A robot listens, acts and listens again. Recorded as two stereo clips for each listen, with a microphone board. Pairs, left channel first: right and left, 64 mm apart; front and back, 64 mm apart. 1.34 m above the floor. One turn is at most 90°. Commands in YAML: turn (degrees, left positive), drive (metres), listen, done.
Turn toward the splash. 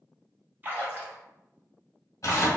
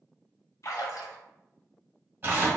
turn: 30
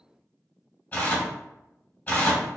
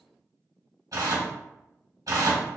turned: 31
done: "Facing where the splash came from. I can't hear it now."